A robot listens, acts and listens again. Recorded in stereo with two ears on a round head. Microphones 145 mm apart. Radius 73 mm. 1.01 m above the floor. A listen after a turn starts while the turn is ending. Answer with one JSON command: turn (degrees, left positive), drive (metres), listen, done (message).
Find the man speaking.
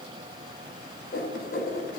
{"listen": true}
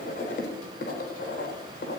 {"listen": true}
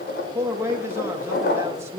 {"turn": -20}
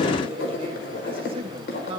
{"turn": -140}
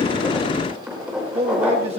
{"turn": -40}
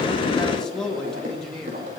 {"done": "Found it: a man speaking, straight ahead, 1 to 2 m away."}